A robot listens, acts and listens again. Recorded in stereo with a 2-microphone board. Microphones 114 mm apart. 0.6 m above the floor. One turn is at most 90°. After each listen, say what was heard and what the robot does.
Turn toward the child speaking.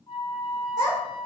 The child speaking: about 35° right or 145° right. Turn 35° right.
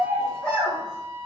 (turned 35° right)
So it is at 15° left. Turn 15° left.
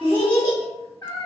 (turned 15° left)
The child speaking is now 30° left. Turn 30° left.
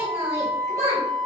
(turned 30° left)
The child speaking is now 20° left. Turn 20° left.
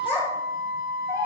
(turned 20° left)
The child speaking is now 25° left. Turn 25° left.
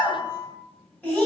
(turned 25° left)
The child speaking is now 15° left. Turn 15° left.
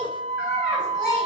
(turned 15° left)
Facing the child speaking, 1 to 2 m away.